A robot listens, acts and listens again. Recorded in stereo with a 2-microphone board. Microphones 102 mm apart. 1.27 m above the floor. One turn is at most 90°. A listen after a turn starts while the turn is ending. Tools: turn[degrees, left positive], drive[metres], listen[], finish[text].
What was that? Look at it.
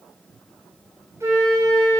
Thought: The flute: about 30° right or 150° right.
Action: turn[-30]
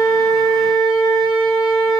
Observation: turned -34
Thought: So it is at 120° right.
Action: turn[-90]
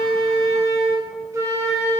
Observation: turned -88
Thought: The flute is now 30° right.
Action: turn[-30]
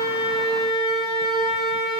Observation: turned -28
Action: finish[Facing the flute.]